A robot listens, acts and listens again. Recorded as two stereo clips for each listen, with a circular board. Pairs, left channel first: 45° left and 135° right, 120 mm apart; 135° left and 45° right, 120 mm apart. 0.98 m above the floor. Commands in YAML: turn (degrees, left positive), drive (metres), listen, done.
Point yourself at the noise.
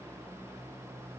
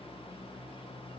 listen: true
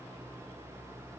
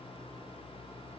listen: true
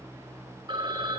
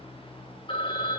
turn: 175
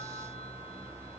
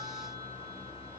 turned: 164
turn: 10
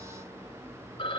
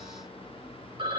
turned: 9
done: "Facing the phone ringing, 2 to 4 m away."